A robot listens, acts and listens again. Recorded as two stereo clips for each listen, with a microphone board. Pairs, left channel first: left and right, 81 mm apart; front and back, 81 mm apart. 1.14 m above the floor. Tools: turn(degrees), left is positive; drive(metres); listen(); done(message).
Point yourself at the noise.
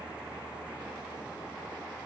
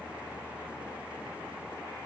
listen()
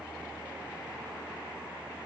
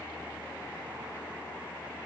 listen()
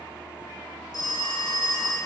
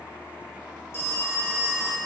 turn(degrees=55)
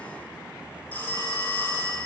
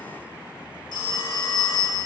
turn(degrees=20)
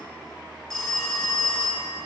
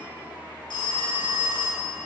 done("Found it: a phone ringing, straight ahead, under 1 m away.")